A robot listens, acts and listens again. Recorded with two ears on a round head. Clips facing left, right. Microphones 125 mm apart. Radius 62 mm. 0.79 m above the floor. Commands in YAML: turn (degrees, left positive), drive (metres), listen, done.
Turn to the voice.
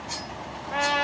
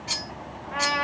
listen: true
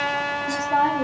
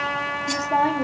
turn: -30
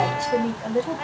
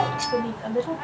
turn: 15
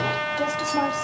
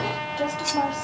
done: "Facing the woman speaking, 1 to 2 m away."